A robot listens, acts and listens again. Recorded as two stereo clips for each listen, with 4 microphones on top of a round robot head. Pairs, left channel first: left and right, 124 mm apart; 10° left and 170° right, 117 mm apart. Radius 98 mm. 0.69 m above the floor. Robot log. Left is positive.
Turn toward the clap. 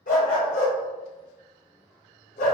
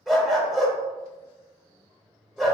cmd idle
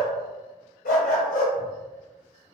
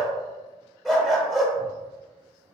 cmd idle
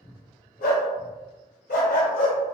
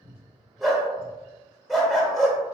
end: I can't make out a clap to turn to.